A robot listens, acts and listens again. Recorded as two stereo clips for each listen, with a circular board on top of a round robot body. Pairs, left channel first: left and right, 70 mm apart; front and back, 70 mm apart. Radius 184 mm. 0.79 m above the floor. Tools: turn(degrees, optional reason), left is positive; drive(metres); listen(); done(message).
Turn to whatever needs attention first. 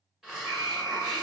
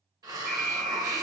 turn(degrees=-95, reason="The alarm: 95° right.")
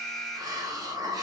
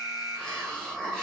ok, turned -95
done("Found it: an alarm, straight ahead.")